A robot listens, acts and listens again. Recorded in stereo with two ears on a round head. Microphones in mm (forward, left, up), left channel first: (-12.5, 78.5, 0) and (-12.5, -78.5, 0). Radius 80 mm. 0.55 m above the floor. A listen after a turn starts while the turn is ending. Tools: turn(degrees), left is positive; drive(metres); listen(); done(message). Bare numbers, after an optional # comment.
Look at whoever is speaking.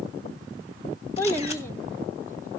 turn(30)
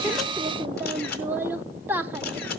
# So it is at 15° right.
turn(-15)
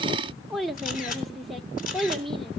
done("Found it: a child speaking, straight ahead, under 1 m away.")